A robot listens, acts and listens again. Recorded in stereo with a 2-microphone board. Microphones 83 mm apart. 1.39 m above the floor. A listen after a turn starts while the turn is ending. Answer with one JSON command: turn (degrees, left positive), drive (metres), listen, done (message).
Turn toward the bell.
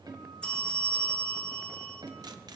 {"turn": 30}
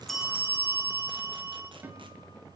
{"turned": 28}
{"turn": -15}
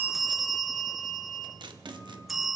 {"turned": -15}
{"done": "Facing the bell, 1 to 2 m away."}